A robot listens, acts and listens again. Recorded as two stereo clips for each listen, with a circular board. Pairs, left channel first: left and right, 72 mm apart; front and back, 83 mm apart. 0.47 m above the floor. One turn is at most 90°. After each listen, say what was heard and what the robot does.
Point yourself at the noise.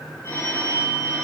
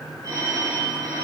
The phone ringing: 140° left. Turn 90° left.
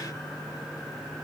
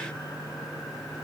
Nothing new. It was at 50° left. Turn 50° left.
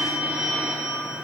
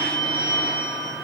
The phone ringing is now 15° right. Turn 15° right.
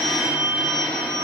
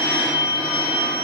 Found it: a phone ringing, straight ahead, 2 to 4 m away.